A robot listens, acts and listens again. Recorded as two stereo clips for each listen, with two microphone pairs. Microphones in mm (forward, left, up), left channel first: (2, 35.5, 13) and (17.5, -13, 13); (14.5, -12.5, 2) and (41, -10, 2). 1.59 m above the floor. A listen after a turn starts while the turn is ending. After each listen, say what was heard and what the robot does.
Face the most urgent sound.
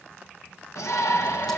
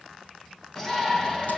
The shout: 110° left. Turn 110° left.
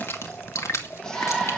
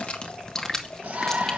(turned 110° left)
The shout is now 25° left. Turn 25° left.
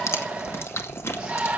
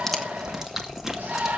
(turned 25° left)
Found it: a shout, straight ahead, 1 to 2 m away.